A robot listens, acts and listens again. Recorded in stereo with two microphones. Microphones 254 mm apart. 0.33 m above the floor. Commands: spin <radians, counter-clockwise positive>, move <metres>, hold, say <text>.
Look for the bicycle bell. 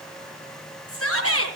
hold
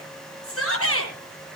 hold
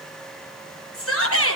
say I can't make out a bicycle bell, only a shout.